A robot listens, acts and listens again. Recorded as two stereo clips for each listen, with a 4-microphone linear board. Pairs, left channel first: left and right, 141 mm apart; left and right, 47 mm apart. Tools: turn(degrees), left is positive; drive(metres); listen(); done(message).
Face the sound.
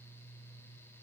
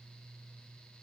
listen()
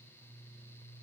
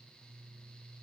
listen()
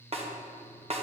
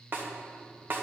turn(degrees=-45)
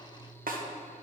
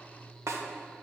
turn(degrees=-85)
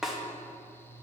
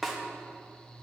done("Facing the snare drum.")